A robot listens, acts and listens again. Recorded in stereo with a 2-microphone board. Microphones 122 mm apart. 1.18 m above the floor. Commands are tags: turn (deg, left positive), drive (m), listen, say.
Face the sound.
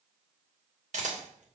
<turn deg="-90"/>
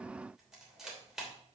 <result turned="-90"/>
<say>Facing the camera shutter.</say>